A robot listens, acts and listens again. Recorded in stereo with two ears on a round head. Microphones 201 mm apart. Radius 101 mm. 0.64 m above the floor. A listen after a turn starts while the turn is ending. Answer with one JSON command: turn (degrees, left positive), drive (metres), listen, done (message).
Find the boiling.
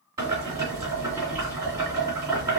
{"turn": -15}
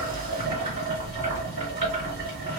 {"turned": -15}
{"turn": -150}
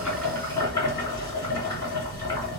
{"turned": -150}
{"turn": 20}
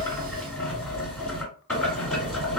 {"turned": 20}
{"done": "Found it: boiling, straight ahead, 1 to 2 m away."}